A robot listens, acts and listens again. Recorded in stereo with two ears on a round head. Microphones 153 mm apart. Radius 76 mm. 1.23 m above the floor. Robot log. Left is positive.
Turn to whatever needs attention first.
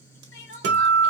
cmd yaw +90
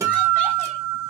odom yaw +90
cmd idle
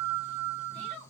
note: The crying is now 10° left.
cmd yaw +10
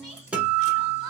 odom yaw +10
cmd idle
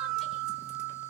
cmd idle
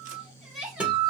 end: Facing the crying, 1 to 2 m away.